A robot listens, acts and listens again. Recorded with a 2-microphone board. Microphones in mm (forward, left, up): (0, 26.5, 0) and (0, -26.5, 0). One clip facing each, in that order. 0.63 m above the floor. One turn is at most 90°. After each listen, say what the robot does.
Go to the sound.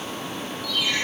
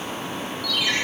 Turn 65° right.
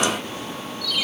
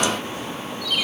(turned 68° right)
Turn 45° right.
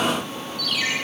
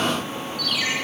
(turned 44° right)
Drive 1.0 m forward.
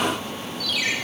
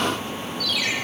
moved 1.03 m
Drive 1.0 m forward.
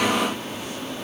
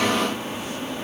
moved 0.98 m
Keep listening.
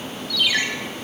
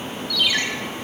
Drive 1.0 m forward.
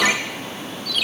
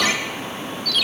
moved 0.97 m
Turn 20° left.
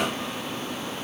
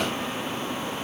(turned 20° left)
Keep listening.
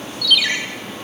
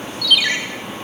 Drive 1.0 m forward.
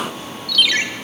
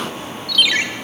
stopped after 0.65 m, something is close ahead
I am next to the ringtone.